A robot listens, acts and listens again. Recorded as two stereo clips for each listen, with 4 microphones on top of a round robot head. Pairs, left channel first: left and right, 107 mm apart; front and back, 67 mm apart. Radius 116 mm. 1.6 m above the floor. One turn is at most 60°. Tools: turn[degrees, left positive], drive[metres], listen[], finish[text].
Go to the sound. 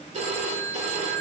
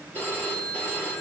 Thought: The phone ringing: 75° right.
Action: turn[-60]
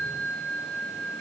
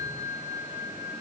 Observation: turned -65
Thought: The phone ringing is now 10° right.
Action: turn[-10]
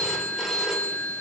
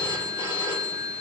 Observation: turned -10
Action: drive[1.0]
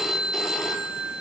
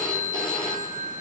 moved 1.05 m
Action: drive[1.0]
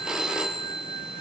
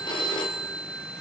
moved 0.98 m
Action: drive[1.0]
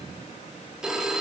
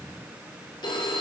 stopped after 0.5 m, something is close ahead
Action: finish[Arrived at the phone ringing, straight ahead.]